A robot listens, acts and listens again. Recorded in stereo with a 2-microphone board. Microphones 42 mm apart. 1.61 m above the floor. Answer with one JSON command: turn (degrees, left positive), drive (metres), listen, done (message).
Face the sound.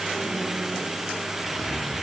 {"turn": 45}
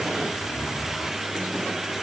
{"turn": 85}
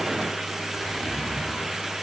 {"turn": 20}
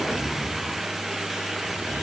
{"done": "Found it: a zipper, straight ahead, over 4 m away."}